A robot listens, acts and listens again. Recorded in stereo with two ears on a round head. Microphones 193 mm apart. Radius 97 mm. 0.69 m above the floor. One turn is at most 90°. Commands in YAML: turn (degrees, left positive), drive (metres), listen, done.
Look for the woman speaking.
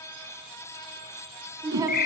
turn: -15
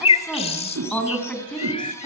turn: 30
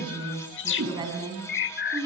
turn: -20
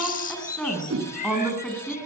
done: "Found it: a woman speaking, straight ahead."